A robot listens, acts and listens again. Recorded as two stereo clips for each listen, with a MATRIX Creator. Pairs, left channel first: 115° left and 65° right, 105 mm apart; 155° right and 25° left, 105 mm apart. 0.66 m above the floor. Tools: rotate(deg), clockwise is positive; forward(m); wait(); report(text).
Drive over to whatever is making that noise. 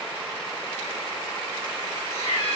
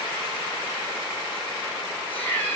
rotate(-130)
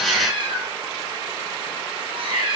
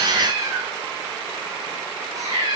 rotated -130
rotate(35)
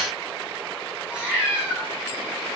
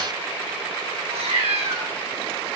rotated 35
rotate(-10)
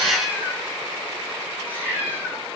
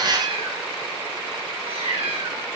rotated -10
forward(1.0)
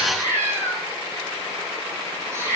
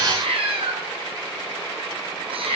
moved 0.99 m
forward(1.0)
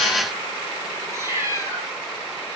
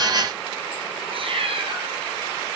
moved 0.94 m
forward(1.0)
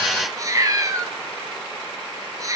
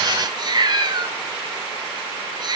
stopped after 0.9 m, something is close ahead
rotate(15)
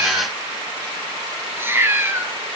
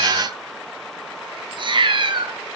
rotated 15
report("Arrived at the cat meowing, straight ahead.")